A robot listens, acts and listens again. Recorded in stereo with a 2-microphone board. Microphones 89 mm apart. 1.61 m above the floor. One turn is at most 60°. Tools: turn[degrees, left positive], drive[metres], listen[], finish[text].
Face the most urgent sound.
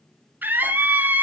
Thought: The scream: about 20° right or 160° right.
Action: turn[-20]
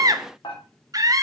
Thought: So it is at 140° right.
Action: turn[-60]
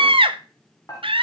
Thought: The scream is now 100° right.
Action: turn[-60]
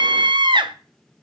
Thought: The scream is now 60° right.
Action: turn[-60]
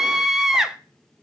Action: finish[Facing the scream, under 1 m away.]